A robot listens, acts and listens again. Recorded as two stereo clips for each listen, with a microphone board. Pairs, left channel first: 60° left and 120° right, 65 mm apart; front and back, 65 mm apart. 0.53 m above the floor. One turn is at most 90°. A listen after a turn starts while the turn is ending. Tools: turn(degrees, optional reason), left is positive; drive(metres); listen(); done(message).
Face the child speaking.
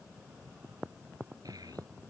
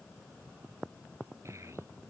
turn(degrees=-90, reason="The child speaking: 140° right.")
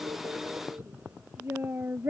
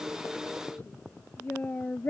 turn(degrees=-60, reason="The child speaking is now 60° right.")
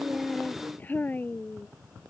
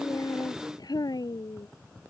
done("Facing the child speaking.")